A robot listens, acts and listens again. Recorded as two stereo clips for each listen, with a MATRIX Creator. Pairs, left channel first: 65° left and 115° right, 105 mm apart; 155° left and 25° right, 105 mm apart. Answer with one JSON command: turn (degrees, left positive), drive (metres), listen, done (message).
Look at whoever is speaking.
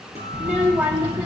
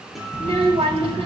{"turn": -35}
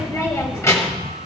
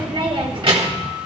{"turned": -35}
{"turn": 10}
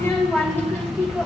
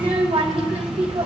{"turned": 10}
{"done": "Found it: a child speaking, straight ahead, 1 to 2 m away."}